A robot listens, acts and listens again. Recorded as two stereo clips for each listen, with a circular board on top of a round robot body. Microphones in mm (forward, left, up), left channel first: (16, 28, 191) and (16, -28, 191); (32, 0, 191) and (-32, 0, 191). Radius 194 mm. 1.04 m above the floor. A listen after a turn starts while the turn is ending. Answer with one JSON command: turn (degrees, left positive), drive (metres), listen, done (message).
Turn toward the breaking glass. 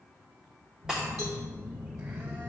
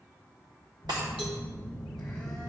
{"turn": -170}
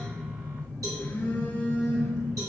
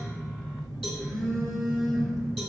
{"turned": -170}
{"done": "I heard breaking glass from this way, but can't make it out now."}